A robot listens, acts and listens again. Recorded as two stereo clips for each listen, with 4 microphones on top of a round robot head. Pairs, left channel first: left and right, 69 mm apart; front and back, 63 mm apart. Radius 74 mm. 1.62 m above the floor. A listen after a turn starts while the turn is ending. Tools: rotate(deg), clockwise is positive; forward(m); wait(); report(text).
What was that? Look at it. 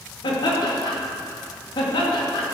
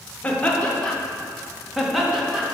rotate(-95)
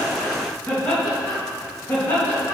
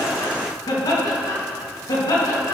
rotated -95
rotate(-20)
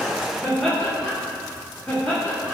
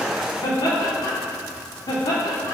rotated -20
report("Facing the laughter.")